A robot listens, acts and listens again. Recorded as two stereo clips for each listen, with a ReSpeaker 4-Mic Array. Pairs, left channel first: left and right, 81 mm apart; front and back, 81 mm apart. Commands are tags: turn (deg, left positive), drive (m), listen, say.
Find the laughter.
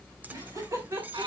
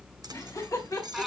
<turn deg="-50"/>
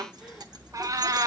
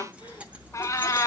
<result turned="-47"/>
<listen/>
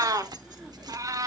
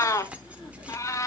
<listen/>
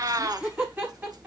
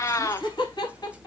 <turn deg="-25"/>
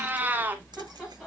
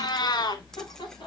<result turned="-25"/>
<listen/>
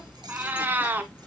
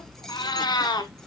<listen/>
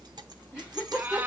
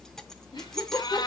<turn deg="-10"/>
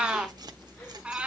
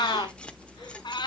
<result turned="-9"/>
<listen/>
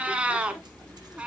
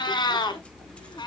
<listen/>
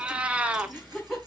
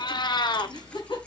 <say>Facing the laughter.</say>